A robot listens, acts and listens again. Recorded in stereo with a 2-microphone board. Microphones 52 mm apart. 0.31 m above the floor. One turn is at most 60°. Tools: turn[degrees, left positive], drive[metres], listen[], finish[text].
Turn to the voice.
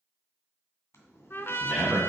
Action: turn[30]
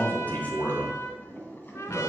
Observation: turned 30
Thought: So it is at 140° left.
Action: turn[60]
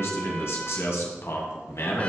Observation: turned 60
Thought: The man speaking is now 70° left.
Action: turn[60]
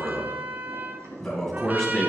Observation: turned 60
Thought: The man speaking is now 10° left.
Action: turn[10]
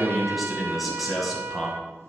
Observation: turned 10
Action: finish[Facing the man speaking.]